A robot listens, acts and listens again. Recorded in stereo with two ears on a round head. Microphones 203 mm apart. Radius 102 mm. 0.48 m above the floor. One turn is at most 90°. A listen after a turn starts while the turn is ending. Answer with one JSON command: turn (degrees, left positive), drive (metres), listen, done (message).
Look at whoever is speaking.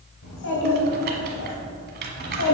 {"turn": 70}
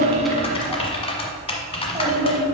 {"turn": -20}
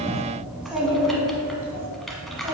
{"turn": -15}
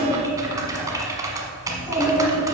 {"done": "Found it: a child speaking, straight ahead, 2 to 4 m away."}